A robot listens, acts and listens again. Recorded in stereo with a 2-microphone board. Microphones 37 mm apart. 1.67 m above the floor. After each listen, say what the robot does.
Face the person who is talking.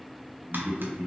Turn 45° right.
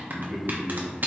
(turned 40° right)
Turn 15° left.
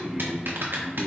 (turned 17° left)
Turn 15° left.
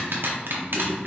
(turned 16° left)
Turn 30° left.
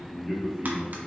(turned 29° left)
Turn 10° left.
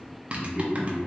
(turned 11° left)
Found it: a man speaking, straight ahead, 2 to 4 m away.